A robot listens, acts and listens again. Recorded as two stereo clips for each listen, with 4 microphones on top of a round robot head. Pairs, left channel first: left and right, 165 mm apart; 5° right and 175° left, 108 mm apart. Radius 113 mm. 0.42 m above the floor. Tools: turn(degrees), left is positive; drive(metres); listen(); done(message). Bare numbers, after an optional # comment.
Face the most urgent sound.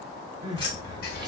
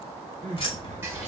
# The crying: 155° right.
turn(-155)
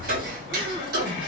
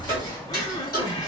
listen()
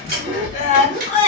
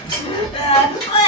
# The crying is now 35° left.
turn(35)
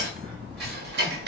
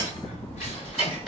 listen()
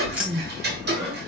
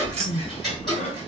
done("Found it: crying, straight ahead, under 1 m away.")